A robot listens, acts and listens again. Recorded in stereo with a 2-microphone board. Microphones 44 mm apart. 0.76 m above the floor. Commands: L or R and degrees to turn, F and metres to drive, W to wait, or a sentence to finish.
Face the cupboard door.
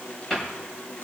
L30
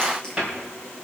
R20
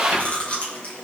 W
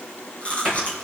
Found it: a cupboard door, straight ahead.